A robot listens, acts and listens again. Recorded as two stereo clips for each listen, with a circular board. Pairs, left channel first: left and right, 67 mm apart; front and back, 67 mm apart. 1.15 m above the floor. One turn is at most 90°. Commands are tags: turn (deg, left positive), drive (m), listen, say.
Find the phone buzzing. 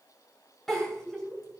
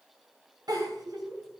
<listen/>
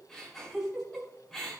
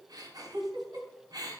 <listen/>
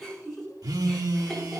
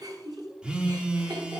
<turn deg="-90"/>
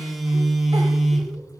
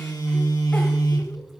<say>Found it: a phone buzzing, straight ahead, 1 to 2 m away.</say>